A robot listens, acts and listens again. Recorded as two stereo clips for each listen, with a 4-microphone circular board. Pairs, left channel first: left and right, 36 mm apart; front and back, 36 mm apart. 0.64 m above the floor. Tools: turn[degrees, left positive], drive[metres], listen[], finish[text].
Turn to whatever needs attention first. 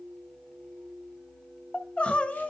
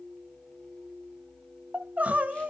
Thought: The crying: 140° left.
Action: turn[140]
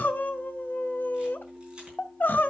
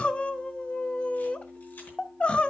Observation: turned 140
Thought: The crying is now 55° left.
Action: turn[55]
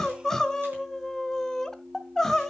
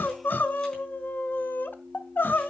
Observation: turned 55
Thought: The crying is now 10° left.
Action: turn[10]
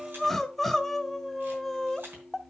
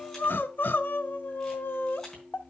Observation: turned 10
Action: finish[Found it: crying, straight ahead, under 1 m away.]